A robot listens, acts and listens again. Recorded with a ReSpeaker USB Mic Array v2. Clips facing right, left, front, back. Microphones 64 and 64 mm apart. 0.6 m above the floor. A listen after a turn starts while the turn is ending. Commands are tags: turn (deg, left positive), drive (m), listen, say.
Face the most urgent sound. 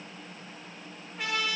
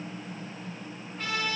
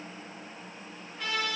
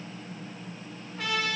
<listen/>
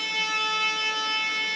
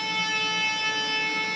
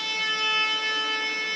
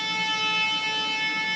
<listen/>
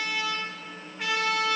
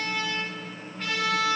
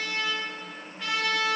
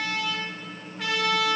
<say>I can't make out anything urgent to turn to.</say>